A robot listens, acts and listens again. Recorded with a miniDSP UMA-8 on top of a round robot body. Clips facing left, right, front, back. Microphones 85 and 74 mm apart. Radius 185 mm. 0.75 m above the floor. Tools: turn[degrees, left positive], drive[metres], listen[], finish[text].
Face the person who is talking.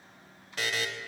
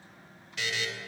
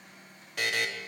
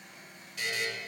Action: listen[]
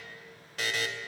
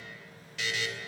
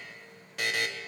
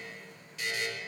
Action: listen[]
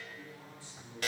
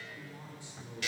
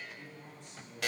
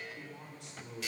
Thought: The man speaking: 160° right.
Action: turn[-160]
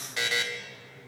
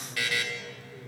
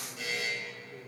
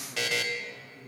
Thought: The man speaking is now 40° right.
Action: turn[-40]
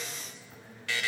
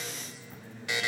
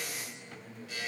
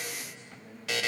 Action: finish[Facing the man speaking.]